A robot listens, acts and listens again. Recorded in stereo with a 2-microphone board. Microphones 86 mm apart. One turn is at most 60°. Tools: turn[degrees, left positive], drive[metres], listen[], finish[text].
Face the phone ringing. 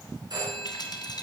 Thought: The phone ringing: about 55° right or 125° right.
Action: turn[-55]
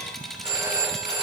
Thought: So it is at 70° right.
Action: turn[-60]
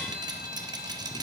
Thought: Nothing new. It was at 10° right.
Action: turn[-10]
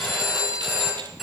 Action: finish[Found it: a phone ringing, straight ahead.]